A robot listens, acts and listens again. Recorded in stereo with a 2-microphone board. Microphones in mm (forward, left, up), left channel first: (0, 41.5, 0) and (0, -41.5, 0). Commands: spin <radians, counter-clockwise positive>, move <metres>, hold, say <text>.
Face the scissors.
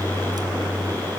hold
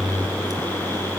hold
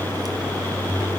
say I can't make out scissors.